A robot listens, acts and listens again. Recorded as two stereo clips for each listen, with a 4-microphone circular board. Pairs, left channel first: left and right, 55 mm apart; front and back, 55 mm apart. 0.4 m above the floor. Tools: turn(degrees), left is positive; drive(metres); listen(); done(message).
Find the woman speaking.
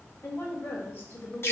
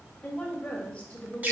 turn(degrees=55)
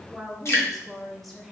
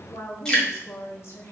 done("Found it: a woman speaking, straight ahead, 1 to 2 m away.")